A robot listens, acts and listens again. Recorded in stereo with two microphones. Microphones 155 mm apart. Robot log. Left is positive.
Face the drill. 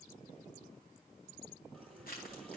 cmd idle
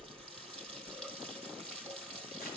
cmd idle
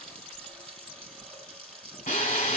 note: The drill: about 60° left or 120° left.
cmd yaw +60
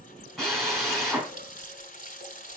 end: Facing the drill, 2 to 4 m away.